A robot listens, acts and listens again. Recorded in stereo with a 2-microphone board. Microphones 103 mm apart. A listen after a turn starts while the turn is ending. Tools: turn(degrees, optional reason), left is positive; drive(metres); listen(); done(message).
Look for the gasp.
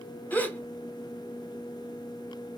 turn(degrees=15, reason="The gasp: about 15° left or 165° left.")
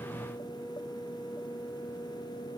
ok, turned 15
listen()
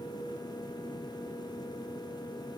done("I heard a gasp, but can't make it out now. It was about straight ahead or 150° left.")